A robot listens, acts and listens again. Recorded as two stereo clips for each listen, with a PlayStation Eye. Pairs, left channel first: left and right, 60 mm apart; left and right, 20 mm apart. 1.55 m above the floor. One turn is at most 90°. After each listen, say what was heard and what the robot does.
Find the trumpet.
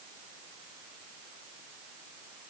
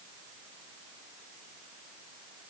Keep listening.
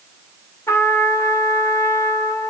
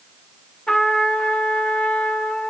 The trumpet: about 55° left or 125° left. Turn 55° left.
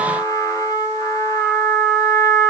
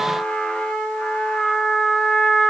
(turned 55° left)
So it is at 70° left. Turn 70° left.
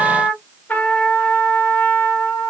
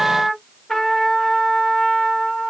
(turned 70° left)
The trumpet is now 25° left. Turn 25° left.
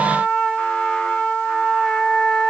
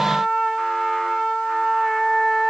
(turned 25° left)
The trumpet is now 15° left. Turn 15° left.
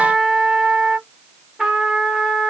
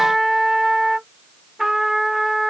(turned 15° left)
Facing the trumpet.